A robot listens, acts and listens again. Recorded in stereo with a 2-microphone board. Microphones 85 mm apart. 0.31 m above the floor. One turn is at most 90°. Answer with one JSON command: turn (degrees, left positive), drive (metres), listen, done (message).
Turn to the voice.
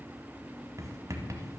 {"listen": true}
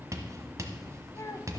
{"turn": 35}
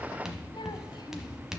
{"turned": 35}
{"listen": true}
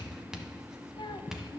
{"turn": 90}
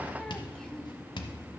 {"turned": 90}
{"turn": 15}
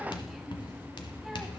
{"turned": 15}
{"listen": true}
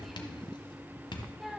{"done": "Facing the child speaking."}